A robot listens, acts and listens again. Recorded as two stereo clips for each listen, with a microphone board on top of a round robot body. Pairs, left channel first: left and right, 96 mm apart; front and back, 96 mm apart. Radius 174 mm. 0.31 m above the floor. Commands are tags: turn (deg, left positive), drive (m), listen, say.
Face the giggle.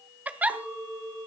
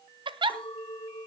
<turn deg="-165"/>
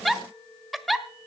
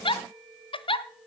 <say>Facing the giggle, 1 to 2 m away.</say>